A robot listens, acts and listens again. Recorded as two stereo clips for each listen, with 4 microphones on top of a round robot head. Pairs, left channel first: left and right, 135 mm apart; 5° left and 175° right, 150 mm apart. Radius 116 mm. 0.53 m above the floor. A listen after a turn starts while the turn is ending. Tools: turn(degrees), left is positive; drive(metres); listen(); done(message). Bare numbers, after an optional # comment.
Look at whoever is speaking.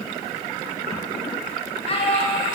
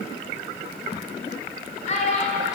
# The child speaking: 45° left.
turn(45)
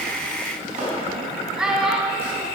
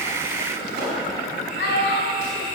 done("Found it: a child speaking, straight ahead, 2 to 4 m away.")